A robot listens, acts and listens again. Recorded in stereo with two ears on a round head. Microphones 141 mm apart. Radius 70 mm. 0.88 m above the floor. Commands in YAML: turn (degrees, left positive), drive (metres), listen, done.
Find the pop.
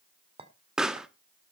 turn: -30
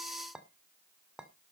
listen: true
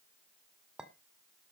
done: "I heard a pop, but can't make it out now. It was about 25° left or 145° right."